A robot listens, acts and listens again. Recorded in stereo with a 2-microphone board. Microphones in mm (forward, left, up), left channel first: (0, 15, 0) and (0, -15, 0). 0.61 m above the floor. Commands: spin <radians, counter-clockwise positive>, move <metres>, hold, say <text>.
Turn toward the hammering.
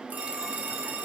hold
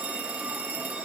hold
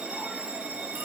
say I can't make out hammering to turn to.